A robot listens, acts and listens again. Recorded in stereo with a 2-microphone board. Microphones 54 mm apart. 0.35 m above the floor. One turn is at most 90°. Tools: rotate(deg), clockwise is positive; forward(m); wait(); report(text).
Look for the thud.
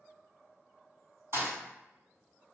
rotate(55)
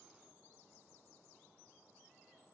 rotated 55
wait()
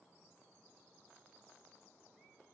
report("I heard a thud, but can't make it out now. It was about straight ahead or 70° right.")